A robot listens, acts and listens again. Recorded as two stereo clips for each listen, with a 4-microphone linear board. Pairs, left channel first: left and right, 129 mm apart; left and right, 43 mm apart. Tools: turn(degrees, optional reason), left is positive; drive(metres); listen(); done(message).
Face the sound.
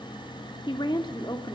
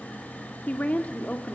turn(degrees=30, reason="The woman speaking: about 30° left or 150° left.")
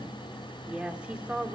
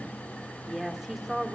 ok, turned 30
turn(degrees=-10, reason="So it is at 10° right.")
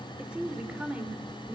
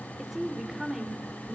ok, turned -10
turn(degrees=-10, reason="The woman speaking is now 10° right.")
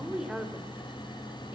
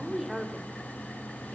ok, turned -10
done("Facing the woman speaking.")